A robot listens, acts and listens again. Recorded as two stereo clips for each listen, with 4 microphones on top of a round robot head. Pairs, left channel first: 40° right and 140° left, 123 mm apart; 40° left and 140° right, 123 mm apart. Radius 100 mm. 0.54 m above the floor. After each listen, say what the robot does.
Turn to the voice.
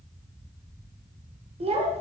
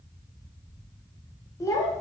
Turn 105° left.
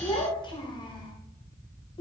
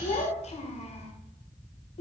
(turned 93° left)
Turn 10° left.
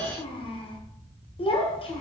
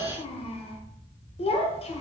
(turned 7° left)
Facing the child speaking, 1 to 2 m away.